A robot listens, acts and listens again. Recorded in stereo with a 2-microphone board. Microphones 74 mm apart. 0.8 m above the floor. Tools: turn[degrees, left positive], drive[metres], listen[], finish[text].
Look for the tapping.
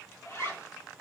Action: listen[]
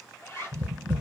Thought: The tapping: about 20° right or 160° right.
Action: turn[-20]
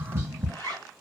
Thought: So it is at 135° right.
Action: turn[-135]
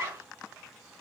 Action: listen[]
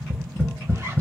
Thought: The tapping is now 25° left.
Action: turn[25]
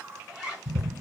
Thought: The tapping is now 10° right.
Action: turn[-10]
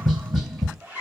Action: finish[Found it: tapping, straight ahead, 1 to 2 m away.]